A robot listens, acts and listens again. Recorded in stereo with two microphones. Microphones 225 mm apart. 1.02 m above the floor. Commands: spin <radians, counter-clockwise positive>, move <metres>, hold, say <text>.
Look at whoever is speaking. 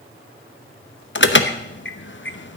hold
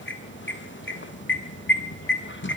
hold
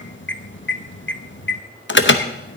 say I can't make out anyone speaking, only an alarm.